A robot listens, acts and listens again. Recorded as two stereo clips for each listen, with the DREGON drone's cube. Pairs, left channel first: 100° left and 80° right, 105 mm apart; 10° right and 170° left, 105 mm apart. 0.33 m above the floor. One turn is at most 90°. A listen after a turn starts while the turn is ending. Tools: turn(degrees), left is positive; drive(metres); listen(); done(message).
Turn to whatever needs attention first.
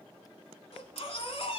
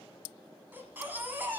turn(degrees=90)
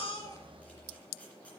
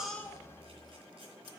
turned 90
turn(degrees=25)
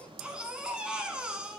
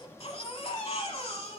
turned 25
done("Found it: a baby crying, straight ahead.")